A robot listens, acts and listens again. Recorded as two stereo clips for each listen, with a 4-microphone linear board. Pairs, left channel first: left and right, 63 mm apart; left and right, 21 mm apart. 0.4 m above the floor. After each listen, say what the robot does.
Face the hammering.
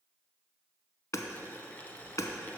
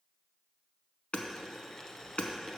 Turn 55° left.
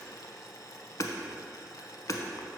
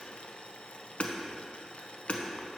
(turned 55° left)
Turn 65° left.
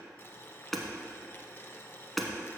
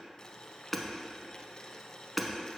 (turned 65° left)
Facing the hammering.